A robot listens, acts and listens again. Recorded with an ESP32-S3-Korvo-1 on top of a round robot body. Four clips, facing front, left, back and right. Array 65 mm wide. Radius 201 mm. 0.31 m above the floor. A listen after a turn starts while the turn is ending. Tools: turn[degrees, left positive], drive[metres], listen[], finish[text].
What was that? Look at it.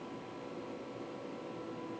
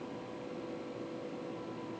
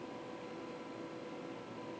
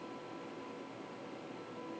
Action: listen[]
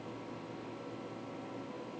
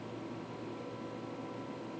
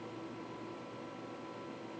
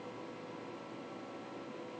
Action: listen[]
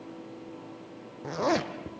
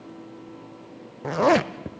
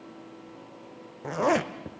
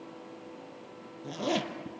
Thought: The zipper: 105° left.
Action: turn[105]
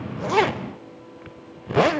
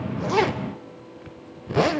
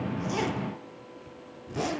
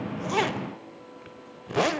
Action: finish[Facing the zipper.]